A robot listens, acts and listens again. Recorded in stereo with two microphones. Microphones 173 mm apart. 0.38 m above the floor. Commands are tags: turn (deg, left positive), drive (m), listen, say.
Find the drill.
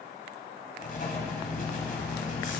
<listen/>
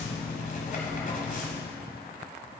<listen/>
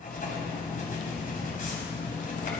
<say>I can't make out a drill, only writing.</say>